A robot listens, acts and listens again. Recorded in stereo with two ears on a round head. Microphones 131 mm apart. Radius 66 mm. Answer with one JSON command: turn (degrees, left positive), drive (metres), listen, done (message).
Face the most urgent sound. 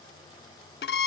{"listen": true}
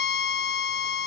{"listen": true}
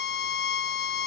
{"done": "I can't make out anything urgent, only a violin."}